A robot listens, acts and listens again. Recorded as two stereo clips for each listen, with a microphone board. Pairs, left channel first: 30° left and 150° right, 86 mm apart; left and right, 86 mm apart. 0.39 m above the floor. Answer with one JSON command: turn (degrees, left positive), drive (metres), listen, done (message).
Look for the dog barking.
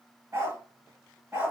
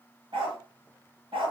{"turn": -85}
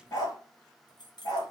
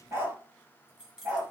{"turn": -20}
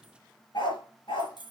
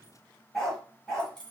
{"done": "Facing the dog barking."}